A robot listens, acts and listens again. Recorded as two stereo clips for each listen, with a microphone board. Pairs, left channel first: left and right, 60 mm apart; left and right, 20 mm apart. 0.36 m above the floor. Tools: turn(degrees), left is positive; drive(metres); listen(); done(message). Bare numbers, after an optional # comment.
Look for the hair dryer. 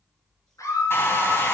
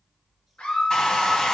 # The hair dryer: about 45° left or 135° left.
turn(45)
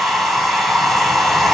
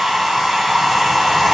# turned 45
done("Facing the hair dryer.")